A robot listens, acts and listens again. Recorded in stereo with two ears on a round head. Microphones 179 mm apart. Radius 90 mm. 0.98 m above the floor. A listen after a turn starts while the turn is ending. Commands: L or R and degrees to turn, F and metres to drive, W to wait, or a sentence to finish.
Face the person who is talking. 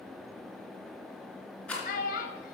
L45
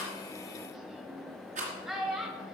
Facing the child speaking.